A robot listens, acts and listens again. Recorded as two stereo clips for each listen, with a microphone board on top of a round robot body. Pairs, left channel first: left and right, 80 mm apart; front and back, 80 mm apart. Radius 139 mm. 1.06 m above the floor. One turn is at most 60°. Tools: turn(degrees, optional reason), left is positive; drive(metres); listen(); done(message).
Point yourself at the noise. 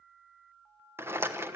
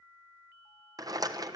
turn(degrees=-60, reason="The rattle: 145° right.")
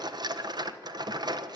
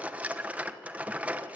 turn(degrees=-60, reason="The rattle is now 105° right.")
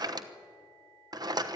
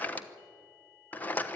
turn(degrees=-60, reason="The rattle is now 65° right.")
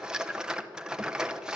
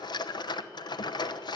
turn(degrees=-10, reason="The rattle is now 10° right.")
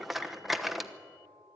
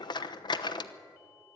done("Found it: a rattle, straight ahead.")